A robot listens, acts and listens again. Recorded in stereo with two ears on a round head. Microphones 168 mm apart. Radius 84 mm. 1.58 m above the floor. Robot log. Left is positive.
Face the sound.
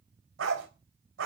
note: The dog barking: about 75° right or 105° right.
cmd yaw -75
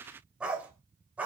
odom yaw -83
note: So it is at 10° right.
cmd yaw -10
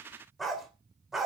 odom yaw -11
end: Found it: a dog barking, straight ahead, 2 to 4 m away.